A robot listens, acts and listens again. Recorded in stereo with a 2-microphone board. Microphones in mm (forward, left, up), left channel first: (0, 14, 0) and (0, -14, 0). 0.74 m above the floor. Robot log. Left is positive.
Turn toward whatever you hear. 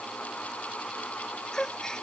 note: The gasp: about 20° left or 160° left.
cmd yaw +20
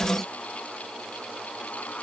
cmd idle
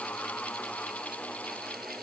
end: I heard a gasp, but can't make it out now. It was about straight ahead or 140° left.